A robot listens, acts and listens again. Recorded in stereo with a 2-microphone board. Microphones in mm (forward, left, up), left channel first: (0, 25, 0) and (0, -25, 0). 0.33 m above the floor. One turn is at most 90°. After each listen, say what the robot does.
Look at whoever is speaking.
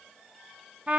Keep listening.
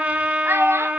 Turn 60° right.
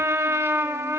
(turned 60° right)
Keep listening.
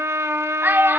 Turn 50° right.
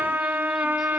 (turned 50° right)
Keep listening.
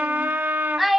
Facing the child speaking.